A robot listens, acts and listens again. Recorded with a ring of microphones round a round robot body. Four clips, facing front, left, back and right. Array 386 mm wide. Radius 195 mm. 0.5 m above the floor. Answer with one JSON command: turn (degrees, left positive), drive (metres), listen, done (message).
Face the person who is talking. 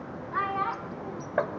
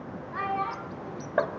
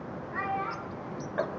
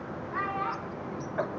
{"done": "Found it: a child speaking, straight ahead, 2 to 4 m away."}